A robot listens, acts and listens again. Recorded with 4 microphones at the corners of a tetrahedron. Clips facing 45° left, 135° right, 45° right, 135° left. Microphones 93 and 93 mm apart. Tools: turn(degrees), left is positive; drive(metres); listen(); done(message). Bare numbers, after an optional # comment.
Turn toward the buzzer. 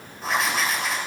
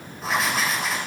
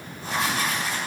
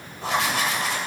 listen()
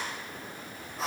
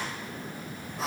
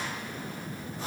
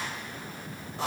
listen()
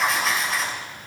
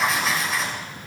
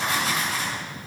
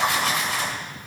done("I can't make out a buzzer, only writing.")